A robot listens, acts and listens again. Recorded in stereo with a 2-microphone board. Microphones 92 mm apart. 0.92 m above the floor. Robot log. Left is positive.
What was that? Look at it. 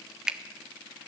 cmd yaw -30
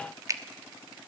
note: So it is at 140° right.
cmd yaw -140
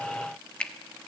note: The finger snap is now 10° left.
cmd yaw +10
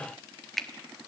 end: Facing the finger snap, 1 to 2 m away.